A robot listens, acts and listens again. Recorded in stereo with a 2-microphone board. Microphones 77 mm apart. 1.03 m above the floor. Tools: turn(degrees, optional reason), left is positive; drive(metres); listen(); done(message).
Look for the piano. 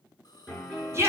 turn(degrees=-30)
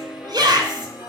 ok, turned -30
turn(degrees=-150, reason="So it is at 150° right.")
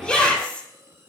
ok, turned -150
turn(degrees=-25, reason="The piano is now 25° right.")
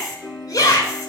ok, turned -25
turn(degrees=15, reason="The piano is now 15° left.")
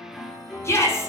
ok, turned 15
done("Found it: a piano, straight ahead.")